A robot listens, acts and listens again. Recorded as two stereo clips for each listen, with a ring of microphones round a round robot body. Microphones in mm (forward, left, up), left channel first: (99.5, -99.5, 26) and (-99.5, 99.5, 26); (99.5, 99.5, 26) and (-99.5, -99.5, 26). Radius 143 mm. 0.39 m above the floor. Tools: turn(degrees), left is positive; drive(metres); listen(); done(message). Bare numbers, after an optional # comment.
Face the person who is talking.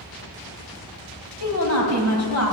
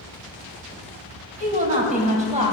# The woman speaking: 70° right.
turn(-70)
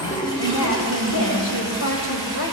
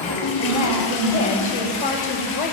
# The woman speaking is now 10° right.
turn(-10)
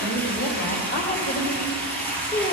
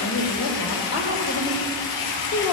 # The woman speaking is now 20° left.
turn(20)
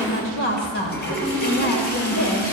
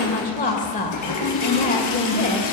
# The woman speaking is now 10° right.
turn(-10)
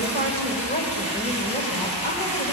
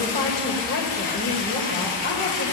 done("Found it: a woman speaking, straight ahead, 2 to 4 m away.")